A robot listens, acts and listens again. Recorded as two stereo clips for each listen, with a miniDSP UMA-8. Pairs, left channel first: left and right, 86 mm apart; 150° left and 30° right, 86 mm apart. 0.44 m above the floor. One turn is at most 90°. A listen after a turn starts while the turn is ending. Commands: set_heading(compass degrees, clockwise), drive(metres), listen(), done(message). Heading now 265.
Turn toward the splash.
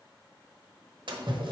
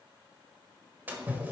set_heading(355)
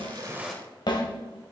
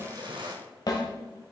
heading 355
done("Found it: a splash, straight ahead, 1 to 2 m away.")